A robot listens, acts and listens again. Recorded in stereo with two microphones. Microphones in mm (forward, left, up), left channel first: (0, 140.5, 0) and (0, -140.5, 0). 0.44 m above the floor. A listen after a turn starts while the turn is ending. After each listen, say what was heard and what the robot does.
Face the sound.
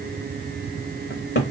The cupboard door: about 40° left or 140° left. Turn 40° left.
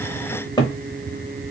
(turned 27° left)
So it is at 15° left. Turn 15° left.
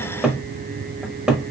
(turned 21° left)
Found it: a cupboard door, straight ahead, under 1 m away.